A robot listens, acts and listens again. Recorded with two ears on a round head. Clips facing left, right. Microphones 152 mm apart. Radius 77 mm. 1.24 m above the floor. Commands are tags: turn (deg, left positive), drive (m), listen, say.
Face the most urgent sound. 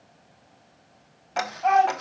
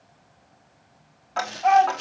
<turn deg="30"/>
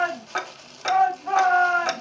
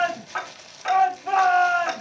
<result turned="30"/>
<turn deg="-30"/>
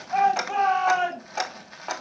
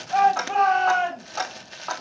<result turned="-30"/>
<say>Facing the shout.</say>